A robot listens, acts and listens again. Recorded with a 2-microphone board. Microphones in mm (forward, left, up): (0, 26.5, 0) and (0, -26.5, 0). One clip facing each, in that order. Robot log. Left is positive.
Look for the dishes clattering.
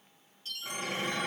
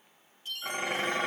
note: The dishes clattering: about 55° right or 125° right.
cmd yaw -55
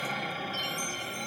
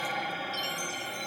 note: So it is at 15° right.
cmd yaw -15
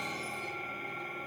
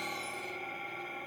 end: Facing the dishes clattering, 1 to 2 m away.